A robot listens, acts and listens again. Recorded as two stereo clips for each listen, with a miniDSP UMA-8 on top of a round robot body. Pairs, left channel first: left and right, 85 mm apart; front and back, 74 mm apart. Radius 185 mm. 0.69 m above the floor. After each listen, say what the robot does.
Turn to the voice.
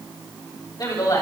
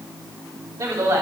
Turn 125° left.
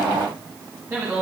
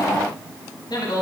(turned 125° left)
Turn 25° right.
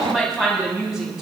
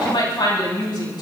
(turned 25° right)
Facing the woman speaking, over 4 m away.